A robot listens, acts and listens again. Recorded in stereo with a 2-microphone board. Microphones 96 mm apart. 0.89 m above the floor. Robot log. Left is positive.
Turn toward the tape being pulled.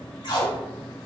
note: The tape being pulled: about 55° left or 125° left.
cmd yaw +55
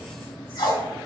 note: So it is at 65° left.
cmd yaw +65
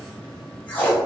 note: The tape being pulled is now 20° left.
cmd yaw +20
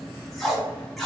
end: Facing the tape being pulled, 1 to 2 m away.